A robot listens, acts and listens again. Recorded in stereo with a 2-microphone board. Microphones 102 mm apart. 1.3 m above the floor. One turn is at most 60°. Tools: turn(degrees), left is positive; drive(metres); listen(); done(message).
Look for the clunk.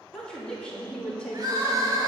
listen()
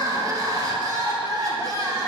listen()
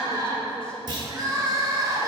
turn(degrees=-45)
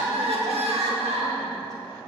listen()
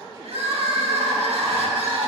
done("I heard a clunk, but can't make it out now. It was about straight ahead or 90° right.")